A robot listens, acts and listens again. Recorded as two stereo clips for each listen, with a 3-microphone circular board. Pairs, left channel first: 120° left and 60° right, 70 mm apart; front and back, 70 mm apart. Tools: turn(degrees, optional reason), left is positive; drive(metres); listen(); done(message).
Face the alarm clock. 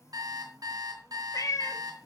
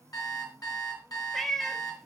turn(degrees=-30, reason="The alarm clock: 30° right.")
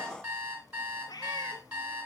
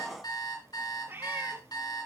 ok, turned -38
done("Found it: an alarm clock, straight ahead.")